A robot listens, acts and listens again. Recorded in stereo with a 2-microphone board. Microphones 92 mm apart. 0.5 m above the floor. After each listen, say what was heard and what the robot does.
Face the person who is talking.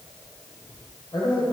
The man speaking: about 60° left or 120° left. Turn 60° left.
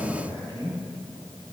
So it is at 40° left. Turn 40° left.
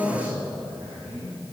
The man speaking is now 25° right. Turn 25° right.
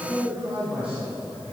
The man speaking is now 10° right. Turn 10° right.
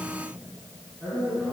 Found it: a man speaking, straight ahead, over 4 m away.